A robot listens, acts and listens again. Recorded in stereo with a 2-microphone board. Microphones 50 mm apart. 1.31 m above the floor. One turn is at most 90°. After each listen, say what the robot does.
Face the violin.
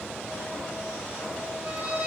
Turn 25° right.
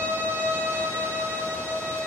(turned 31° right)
Turn 90° right.
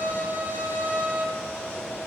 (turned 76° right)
Turn 50° right.
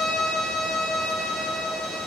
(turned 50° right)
Found it: a violin, straight ahead, under 1 m away.